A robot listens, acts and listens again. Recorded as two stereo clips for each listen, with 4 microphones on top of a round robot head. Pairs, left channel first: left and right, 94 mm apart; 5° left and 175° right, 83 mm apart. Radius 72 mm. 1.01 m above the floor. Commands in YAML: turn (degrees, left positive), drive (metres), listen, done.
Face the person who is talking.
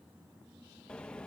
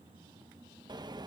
listen: true
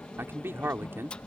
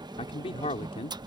turn: -25
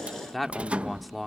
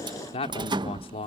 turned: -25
done: "Facing the man speaking."